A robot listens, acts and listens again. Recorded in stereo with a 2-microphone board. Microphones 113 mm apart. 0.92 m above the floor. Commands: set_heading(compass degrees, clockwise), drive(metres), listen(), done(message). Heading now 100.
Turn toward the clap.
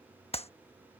set_heading(35)
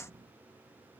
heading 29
set_heading(4)
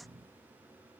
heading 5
listen()
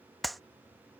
done("Facing the clap.")